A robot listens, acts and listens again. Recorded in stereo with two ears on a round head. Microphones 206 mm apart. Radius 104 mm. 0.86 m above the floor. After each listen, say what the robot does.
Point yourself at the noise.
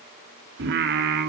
Turn 45° right.
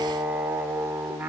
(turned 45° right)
Found it: singing, straight ahead.